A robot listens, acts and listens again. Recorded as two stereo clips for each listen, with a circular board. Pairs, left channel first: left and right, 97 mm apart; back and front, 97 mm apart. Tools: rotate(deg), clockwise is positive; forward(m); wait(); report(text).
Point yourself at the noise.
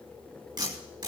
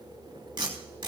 rotate(45)
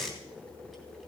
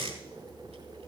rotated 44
report("Found it: tape being pulled, straight ahead, 2 to 4 m away.")